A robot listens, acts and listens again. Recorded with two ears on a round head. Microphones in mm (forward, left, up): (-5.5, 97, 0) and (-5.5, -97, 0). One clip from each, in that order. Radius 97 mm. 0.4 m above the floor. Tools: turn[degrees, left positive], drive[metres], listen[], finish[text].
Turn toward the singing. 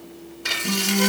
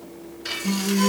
Thought: The singing: about 70° right or 110° right.
Action: turn[-70]
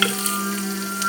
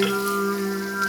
Thought: So it is at 40° right.
Action: turn[-40]
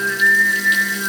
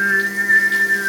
Action: finish[Found it: singing, straight ahead, over 4 m away.]